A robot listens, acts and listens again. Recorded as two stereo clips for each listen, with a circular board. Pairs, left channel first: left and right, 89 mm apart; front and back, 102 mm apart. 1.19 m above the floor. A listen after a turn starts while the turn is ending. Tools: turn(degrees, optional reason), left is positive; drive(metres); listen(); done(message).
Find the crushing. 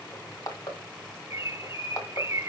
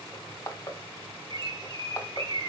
turn(degrees=50, reason="The crushing: 50° left.")
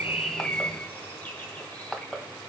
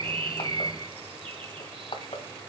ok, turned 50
done("Facing the crushing.")